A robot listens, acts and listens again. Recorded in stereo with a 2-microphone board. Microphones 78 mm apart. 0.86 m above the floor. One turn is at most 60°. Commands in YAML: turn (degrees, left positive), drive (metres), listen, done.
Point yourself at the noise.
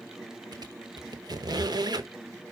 turn: -60
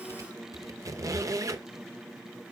turn: -50
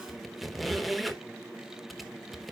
done: "Facing the squeak."